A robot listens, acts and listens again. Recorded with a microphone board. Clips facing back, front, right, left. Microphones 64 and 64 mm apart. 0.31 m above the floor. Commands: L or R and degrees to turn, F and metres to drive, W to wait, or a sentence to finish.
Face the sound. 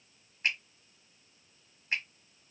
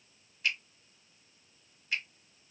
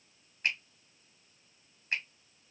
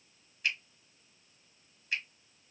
R135
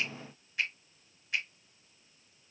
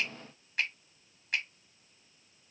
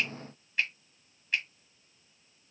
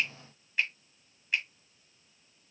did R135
L10
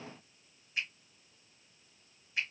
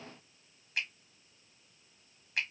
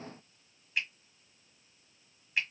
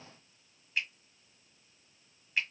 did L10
Found it: a finger snap, straight ahead.